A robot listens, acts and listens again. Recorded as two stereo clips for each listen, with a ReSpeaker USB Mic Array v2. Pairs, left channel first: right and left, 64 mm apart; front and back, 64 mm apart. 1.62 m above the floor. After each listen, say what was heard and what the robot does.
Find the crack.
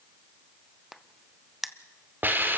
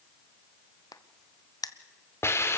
Found it: a crack, straight ahead.